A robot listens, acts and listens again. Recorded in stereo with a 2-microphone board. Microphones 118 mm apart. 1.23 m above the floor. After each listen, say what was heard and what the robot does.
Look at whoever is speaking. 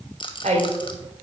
Turn 90° right.
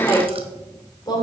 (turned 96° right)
So it is at 35° left. Turn 35° left.
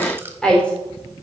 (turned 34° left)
The woman speaking is now 10° left. Turn 10° left.
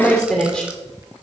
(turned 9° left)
The woman speaking is now 10° left. Turn 10° left.
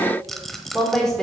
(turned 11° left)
Found it: a woman speaking, straight ahead, 2 to 4 m away.